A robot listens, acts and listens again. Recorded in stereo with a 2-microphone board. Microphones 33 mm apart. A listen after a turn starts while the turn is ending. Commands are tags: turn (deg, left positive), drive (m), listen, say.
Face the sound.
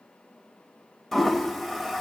<turn deg="30"/>
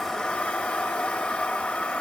<turn deg="140"/>
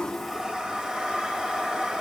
<turn deg="-25"/>
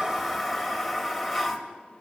<say>Found it: a toilet flushing, straight ahead.</say>